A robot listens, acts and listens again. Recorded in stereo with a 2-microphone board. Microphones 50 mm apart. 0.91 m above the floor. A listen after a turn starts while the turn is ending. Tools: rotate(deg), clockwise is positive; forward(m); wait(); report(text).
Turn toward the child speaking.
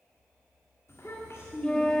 rotate(-65)
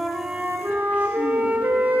wait()
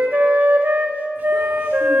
wait()
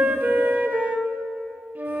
report("I heard a child speaking, but can't make it out now. It was about straight ahead or 50° left.")